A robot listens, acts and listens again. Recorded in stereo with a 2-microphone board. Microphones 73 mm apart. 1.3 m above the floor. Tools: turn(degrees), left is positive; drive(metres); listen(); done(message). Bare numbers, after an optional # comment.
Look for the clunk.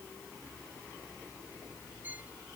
listen()
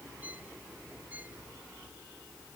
listen()
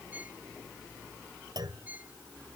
turn(-90)
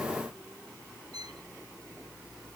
done("I heard a clunk from this way, but can't make it out now.")